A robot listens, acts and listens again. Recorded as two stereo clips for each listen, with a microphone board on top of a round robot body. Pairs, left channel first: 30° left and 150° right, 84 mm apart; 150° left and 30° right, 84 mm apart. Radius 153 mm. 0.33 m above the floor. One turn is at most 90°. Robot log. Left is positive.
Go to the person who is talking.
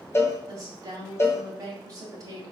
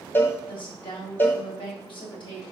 note: The woman speaking: 160° left.
cmd yaw +90
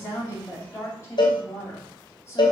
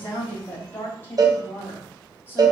note: The woman speaking is now 85° left.
cmd yaw +85
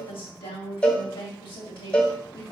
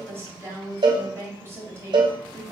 note: The woman speaking is now 30° left.
cmd yaw +30
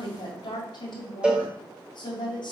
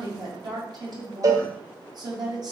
cmd fwd 1.0
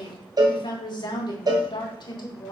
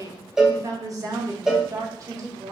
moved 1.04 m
note: The woman speaking is now 10° left.
cmd yaw +10
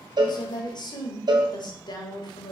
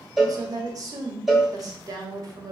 cmd fwd 1.0
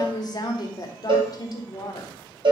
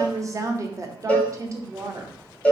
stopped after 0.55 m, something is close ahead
note: The woman speaking is now 10° left.
cmd yaw +10
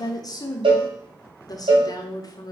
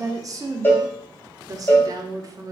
end: I am next to the woman speaking.